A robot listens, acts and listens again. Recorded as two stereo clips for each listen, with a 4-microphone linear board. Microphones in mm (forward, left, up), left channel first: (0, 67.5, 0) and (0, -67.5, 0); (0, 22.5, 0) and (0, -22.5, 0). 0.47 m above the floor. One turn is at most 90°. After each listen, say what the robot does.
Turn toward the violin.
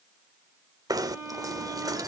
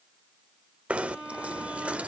Turn 15° right.
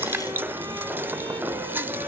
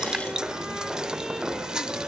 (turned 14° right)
Keep listening.
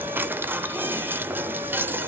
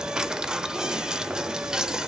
Keep listening.
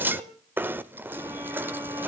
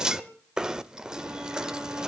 I heard a violin, but can't make it out now. It was about straight ahead or 150° right.